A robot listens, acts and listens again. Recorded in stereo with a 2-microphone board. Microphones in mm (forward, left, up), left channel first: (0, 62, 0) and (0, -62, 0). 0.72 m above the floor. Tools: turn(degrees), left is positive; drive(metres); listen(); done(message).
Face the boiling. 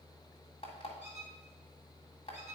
listen()
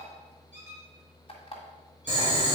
turn(degrees=-40)
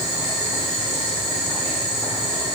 done("Facing the boiling.")